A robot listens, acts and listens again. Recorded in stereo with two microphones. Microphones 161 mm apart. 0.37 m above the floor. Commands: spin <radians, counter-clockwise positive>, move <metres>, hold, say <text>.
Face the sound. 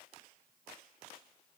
hold
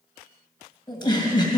spin 0.52
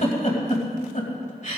spin 2.01
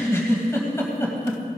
spin 0.35
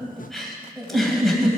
say Facing the giggle.